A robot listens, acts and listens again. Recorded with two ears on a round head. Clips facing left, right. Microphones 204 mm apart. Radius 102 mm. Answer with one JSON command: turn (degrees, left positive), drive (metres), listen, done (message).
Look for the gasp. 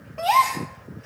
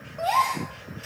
{"turn": 90}
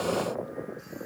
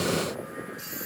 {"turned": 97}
{"done": "I heard a gasp from this way, but can't make it out now."}